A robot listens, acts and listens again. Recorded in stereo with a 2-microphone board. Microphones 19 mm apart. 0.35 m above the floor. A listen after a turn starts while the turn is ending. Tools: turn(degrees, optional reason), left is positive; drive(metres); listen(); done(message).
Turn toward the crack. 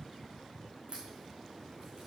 turn(degrees=-70, reason="The crack: about 70° right or 110° right.")
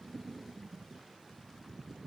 listen()
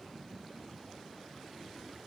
done("I heard a crack, but can't make it out now. It was about straight ahead or 40° right.")